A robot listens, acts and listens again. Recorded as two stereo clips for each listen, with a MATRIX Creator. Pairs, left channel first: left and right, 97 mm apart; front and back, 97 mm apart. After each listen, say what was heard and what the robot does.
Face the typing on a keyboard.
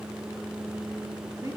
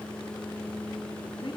Keep listening.
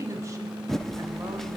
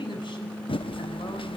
Found it: typing on a keyboard, straight ahead, under 1 m away.